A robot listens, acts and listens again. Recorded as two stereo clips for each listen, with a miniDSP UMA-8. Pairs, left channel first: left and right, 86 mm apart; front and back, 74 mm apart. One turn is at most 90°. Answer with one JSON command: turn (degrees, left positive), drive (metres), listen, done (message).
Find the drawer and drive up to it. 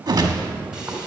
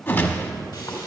{"listen": true}
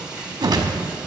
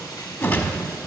{"listen": true}
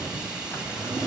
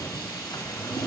{"turn": 25}
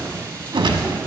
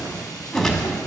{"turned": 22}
{"listen": true}
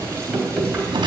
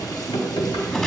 {"drive": 1.0}
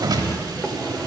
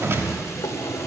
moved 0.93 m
{"drive": 1.0}
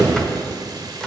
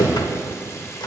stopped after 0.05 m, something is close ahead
{"turn": 10}
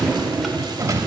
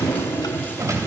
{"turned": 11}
{"done": "Arrived at the drawer, straight ahead."}